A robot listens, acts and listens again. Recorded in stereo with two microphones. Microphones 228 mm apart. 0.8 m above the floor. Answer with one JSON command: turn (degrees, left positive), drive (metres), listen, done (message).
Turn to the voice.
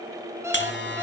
{"listen": true}
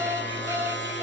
{"listen": true}
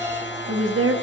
{"turn": -65}
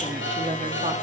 {"turn": -35}
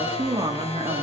{"turn": -25}
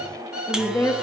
{"turn": 10}
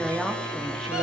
{"listen": true}
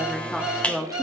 {"done": "Facing the woman speaking, 1 to 2 m away."}